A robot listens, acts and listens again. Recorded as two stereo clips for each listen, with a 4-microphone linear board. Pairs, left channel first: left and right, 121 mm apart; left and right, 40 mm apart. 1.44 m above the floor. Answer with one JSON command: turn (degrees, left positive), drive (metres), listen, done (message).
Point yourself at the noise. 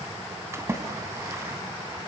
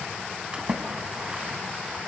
{"turn": -20}
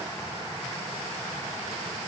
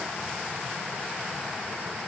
{"listen": true}
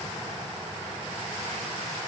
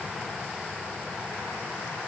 {"done": "I heard a splash, but can't make it out now. It was about straight ahead or 140° right."}